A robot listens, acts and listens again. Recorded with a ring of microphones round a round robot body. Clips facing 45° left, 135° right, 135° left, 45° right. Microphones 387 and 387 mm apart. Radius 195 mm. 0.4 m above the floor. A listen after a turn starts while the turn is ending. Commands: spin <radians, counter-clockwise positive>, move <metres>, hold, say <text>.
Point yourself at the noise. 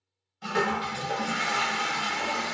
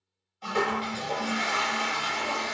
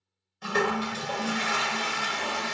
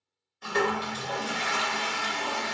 spin 1.92
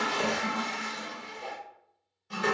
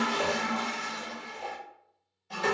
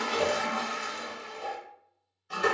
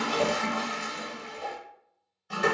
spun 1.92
spin -0.44
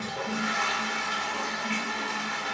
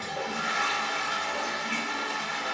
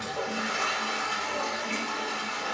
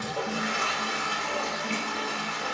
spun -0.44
spin -0.17
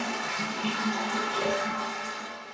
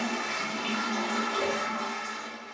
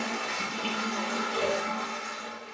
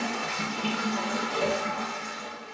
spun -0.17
say Found it: a toilet flushing, straight ahead.